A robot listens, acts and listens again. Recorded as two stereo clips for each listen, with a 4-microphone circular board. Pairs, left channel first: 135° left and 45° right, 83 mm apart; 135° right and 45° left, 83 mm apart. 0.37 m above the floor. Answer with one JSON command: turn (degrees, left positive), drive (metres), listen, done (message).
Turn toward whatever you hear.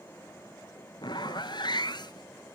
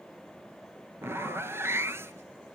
{"turn": 105}
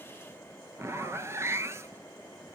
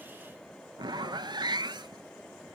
{"turn": 10}
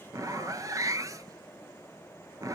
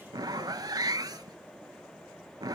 {"done": "Facing the zipper."}